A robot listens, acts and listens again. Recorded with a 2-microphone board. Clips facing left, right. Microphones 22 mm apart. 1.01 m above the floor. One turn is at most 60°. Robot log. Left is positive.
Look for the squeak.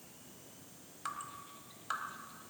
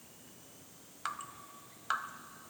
cmd idle
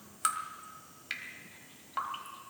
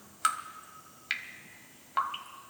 cmd idle
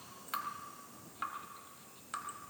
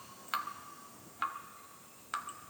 end: I can't make out a squeak, only dripping.